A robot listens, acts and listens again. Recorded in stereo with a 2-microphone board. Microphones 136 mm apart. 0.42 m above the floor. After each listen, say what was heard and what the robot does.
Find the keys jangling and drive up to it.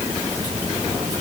Keep listening.
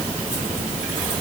Keep listening.
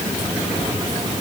I can't make out keys jangling.